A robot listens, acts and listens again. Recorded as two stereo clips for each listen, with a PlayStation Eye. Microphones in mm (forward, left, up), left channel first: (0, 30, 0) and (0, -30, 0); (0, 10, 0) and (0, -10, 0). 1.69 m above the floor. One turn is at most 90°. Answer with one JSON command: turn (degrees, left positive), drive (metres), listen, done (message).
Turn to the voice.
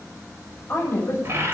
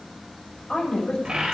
{"turn": 35}
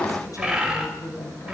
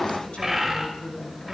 {"turn": 90}
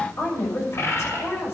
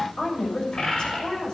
{"turn": 50}
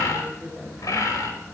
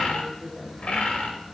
{"done": "Found it: a woman speaking, straight ahead."}